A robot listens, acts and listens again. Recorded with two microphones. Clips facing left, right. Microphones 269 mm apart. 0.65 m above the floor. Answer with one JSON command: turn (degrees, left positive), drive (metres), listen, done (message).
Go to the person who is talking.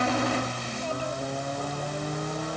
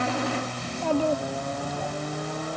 {"turn": -90}
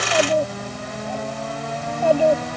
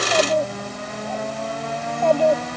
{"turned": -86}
{"turn": 10}
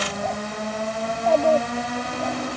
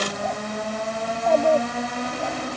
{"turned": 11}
{"drive": 1.0}
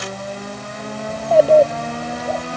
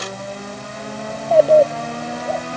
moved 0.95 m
{"drive": 1.0}
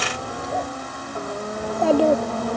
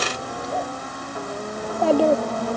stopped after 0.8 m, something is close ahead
{"done": "Arrived at the child speaking, straight ahead."}